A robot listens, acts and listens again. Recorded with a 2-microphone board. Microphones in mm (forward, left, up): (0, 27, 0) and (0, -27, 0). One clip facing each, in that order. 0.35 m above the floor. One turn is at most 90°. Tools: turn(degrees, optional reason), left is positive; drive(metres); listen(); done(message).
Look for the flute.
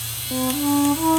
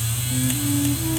turn(degrees=90)
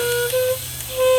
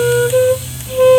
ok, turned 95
turn(degrees=-15, reason="So it is at 15° right.")
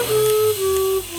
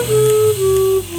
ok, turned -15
done("Facing the flute.")